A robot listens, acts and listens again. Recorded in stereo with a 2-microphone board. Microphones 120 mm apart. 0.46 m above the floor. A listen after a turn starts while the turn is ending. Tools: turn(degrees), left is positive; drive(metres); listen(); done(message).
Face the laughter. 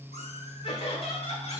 turn(degrees=55)
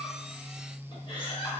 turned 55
turn(degrees=45)
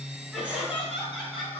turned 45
done("Facing the laughter, 2 to 4 m away.")